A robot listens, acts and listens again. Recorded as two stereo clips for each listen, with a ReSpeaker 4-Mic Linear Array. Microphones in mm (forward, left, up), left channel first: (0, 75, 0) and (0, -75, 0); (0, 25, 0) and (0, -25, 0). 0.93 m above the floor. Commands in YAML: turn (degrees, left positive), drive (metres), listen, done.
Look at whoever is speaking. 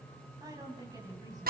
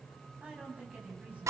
turn: -25
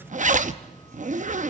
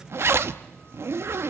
listen: true
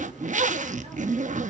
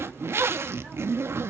listen: true
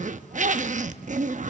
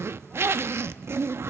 done: "I heard a woman speaking, but can't make it out now. It was about straight ahead or 130° right."